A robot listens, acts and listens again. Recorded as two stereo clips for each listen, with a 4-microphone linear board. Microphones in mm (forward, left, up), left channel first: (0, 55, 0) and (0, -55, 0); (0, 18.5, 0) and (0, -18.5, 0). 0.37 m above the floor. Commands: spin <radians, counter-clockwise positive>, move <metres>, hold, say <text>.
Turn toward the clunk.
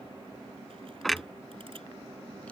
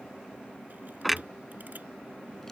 spin 0.52
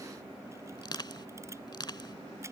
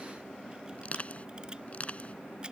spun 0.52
hold
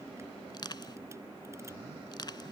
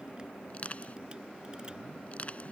say I heard a clunk, but can't make it out now. It was about 30° right or 150° left.